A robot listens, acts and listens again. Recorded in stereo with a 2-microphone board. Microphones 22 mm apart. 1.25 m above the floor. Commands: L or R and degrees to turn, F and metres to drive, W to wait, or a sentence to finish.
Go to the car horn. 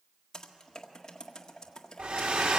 W
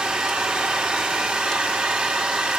W
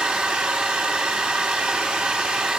I can't make out a car horn to turn to.